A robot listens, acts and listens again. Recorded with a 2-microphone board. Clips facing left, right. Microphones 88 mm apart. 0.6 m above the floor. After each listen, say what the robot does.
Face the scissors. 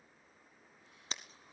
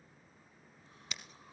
Turn 30° left.
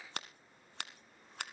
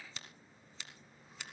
Turn 115° left.
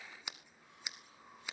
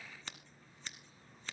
Turn 10° left.
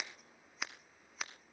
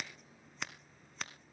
Facing the scissors, 1 to 2 m away.